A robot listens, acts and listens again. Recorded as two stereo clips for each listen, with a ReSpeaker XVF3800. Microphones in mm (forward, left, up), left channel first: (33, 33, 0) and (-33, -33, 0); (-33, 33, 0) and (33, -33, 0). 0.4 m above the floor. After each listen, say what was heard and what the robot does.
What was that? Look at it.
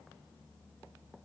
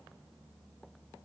Keep listening.
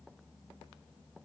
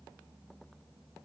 Keep listening.
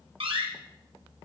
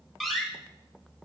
The door slam: 135° right. Turn 135° right.
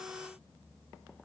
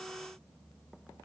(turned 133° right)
I heard a door slam from this way, but can't make it out now.